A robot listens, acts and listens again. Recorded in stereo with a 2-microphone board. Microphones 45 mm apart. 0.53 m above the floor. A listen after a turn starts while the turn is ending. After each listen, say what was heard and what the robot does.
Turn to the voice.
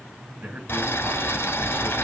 The man speaking: about 40° right or 140° right. Turn 40° right.
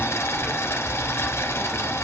Keep listening.
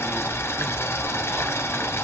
Keep listening.
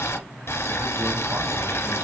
I heard a man speaking, but can't make it out now. It was about straight ahead or 100° right.